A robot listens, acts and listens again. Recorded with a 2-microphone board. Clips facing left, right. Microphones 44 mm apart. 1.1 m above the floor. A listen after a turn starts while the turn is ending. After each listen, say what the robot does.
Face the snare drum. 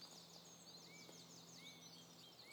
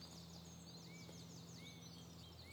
Keep listening.
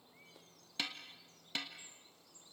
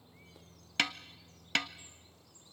Turn 60° right.
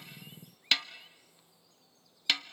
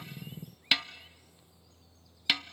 Facing the snare drum, under 1 m away.